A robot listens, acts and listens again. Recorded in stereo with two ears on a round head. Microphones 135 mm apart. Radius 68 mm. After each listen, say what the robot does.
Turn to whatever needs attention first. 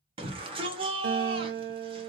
Turn 35° right.
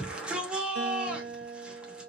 Turn 10° right.
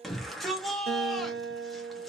Found it: a shout, straight ahead.